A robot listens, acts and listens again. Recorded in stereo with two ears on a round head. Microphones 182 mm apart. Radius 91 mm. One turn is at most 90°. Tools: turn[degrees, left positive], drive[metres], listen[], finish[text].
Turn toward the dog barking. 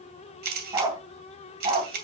Thought: The dog barking: about 25° right or 155° right.
Action: turn[-25]
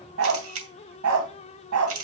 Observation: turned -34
Thought: So it is at 95° right.
Action: turn[-90]
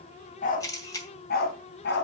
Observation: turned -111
Thought: The dog barking is now 55° left.
Action: turn[55]
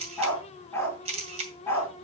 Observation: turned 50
Thought: The dog barking is now 10° left.
Action: turn[10]
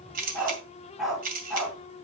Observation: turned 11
Action: finish[Facing the dog barking, 2 to 4 m away.]